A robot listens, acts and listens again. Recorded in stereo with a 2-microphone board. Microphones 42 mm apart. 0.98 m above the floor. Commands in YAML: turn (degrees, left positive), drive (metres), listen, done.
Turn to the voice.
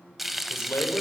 turn: 75
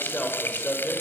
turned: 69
turn: 25
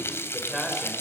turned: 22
done: "Facing the man speaking."